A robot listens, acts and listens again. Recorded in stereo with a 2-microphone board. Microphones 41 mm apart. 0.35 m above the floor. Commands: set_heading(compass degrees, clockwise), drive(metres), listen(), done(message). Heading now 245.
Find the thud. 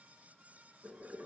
listen()
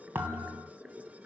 set_heading(310)
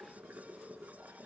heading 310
listen()
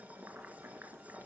done("I heard a thud, but can't make it out now. It was about straight ahead or 50° right.")